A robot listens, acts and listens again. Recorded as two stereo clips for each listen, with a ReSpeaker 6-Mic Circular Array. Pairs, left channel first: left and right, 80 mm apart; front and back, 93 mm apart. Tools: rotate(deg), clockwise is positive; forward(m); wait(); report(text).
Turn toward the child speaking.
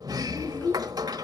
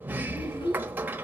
rotate(-25)
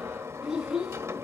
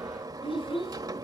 rotate(10)
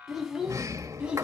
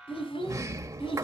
rotate(10)
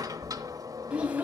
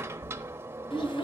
rotate(20)
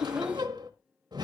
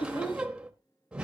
rotate(15)
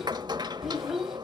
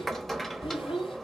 report("Facing the child speaking, 1 to 2 m away.")